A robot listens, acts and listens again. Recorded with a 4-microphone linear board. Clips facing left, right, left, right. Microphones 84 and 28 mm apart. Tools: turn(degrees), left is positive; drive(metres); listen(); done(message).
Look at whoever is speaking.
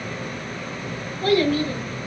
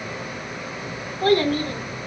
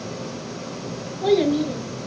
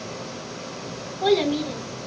turn(degrees=-40)
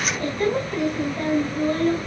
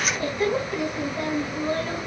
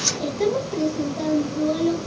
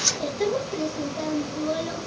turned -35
done("Facing the child speaking, over 4 m away.")